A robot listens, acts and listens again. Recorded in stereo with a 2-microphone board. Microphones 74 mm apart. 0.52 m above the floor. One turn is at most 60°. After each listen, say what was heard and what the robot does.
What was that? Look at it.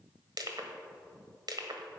The crushing: about 60° right or 120° right. Turn 60° right.
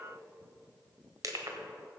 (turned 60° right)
So it is at 55° right. Turn 55° right.
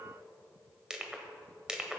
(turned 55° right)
The crushing is now 10° right. Turn 10° right.
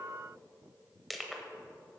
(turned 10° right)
Found it: crushing, straight ahead.